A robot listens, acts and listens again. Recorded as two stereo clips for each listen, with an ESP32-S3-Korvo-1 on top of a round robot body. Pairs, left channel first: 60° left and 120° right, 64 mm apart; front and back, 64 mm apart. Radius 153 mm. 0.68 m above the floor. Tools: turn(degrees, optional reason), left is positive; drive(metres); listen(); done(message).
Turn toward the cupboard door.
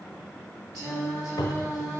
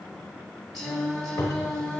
turn(degrees=45, reason="The cupboard door: 45° left.")
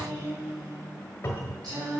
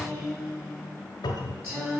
done("Found it: a cupboard door, straight ahead, 1 to 2 m away.")